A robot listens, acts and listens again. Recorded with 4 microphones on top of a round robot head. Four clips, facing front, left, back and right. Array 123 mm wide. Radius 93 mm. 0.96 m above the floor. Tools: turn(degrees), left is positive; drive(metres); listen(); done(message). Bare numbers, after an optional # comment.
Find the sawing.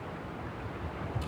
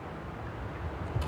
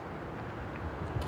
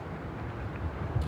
listen()
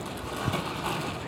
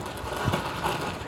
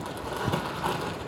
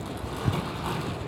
listen()
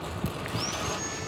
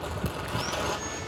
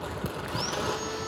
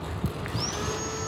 # The sawing: 130° right.
turn(-130)
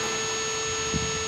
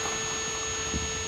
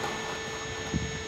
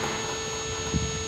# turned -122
# The sawing is now 10° right.
turn(-10)
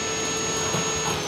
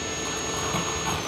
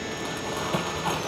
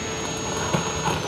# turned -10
done("Facing the sawing, 1 to 2 m away.")